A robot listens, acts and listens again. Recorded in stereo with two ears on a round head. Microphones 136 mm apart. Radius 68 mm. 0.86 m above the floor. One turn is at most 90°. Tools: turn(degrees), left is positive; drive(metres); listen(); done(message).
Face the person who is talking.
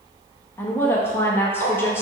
turn(degrees=30)
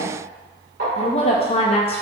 turn(degrees=90)
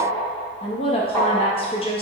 turn(degrees=40)
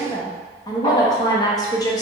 turn(degrees=30)
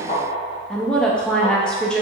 done("Found it: a woman speaking, straight ahead.")